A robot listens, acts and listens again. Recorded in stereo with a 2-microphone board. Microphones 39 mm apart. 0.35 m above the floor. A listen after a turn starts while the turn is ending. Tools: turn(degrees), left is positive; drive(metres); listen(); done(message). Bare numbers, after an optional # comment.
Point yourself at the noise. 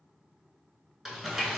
turn(-30)
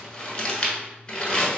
# So it is at 25° left.
turn(25)
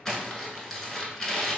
# The crumpling is now 10° left.
turn(10)
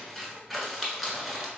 done("Facing the crumpling, under 1 m away.")